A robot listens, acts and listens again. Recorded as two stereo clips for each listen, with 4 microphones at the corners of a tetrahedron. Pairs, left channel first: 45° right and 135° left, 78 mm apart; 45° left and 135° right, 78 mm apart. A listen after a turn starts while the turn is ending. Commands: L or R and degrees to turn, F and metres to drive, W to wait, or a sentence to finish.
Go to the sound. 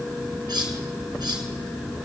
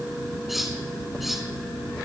L140
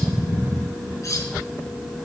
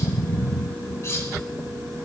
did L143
F1.0
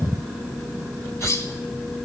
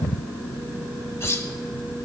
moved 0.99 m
F1.0
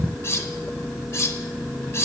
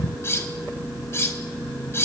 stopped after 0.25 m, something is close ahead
I am next to the cutlery clinking.